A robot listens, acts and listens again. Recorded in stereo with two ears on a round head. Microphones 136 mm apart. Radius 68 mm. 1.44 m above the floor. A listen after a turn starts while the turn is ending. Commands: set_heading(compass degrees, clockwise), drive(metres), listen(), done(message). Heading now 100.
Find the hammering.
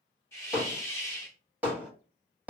set_heading(130)
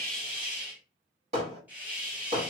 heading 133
set_heading(273)
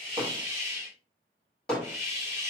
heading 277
done("Found it: hammering, straight ahead, 1 to 2 m away.")